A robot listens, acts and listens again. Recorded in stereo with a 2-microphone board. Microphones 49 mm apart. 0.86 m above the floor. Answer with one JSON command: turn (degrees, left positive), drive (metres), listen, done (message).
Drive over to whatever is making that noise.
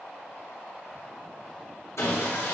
{"turn": 75}
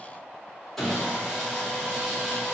{"turn": 10}
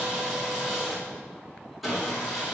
{"drive": 1.0}
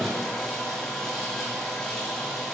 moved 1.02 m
{"drive": 1.0}
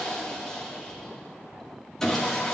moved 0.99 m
{"turn": 15}
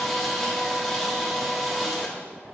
{"drive": 1.0}
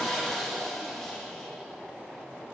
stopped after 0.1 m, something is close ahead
{"done": "I am next to the sawing."}